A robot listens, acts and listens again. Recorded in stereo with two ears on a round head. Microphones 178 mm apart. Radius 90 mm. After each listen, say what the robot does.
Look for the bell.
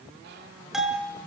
Turn 30° left.
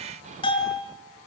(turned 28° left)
Turn 150° left.
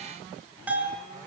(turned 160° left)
Turn 10° right.
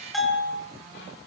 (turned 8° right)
Facing the bell.